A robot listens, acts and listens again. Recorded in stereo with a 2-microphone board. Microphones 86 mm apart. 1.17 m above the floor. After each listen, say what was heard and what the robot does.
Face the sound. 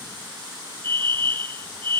The fire alarm: about 70° right or 110° right. Turn 70° right.
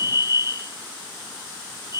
So it is at 35° right. Turn 35° right.
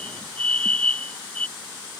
The fire alarm is now 15° left. Turn 15° left.
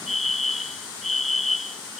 Facing the fire alarm.